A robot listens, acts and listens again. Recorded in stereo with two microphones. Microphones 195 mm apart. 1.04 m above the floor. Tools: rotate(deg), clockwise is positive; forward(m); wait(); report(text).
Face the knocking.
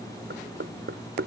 rotate(90)
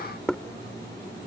report("Facing the knocking.")